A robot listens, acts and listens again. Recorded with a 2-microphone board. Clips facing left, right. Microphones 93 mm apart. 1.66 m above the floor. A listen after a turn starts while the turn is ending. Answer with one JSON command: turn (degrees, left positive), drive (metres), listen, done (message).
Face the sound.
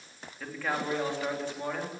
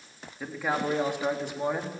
{"turn": -20}
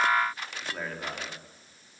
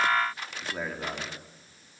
{"turn": -30}
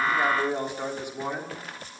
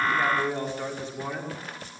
{"turn": 15}
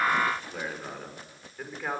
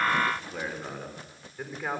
{"done": "Found it: a man speaking, straight ahead, over 4 m away."}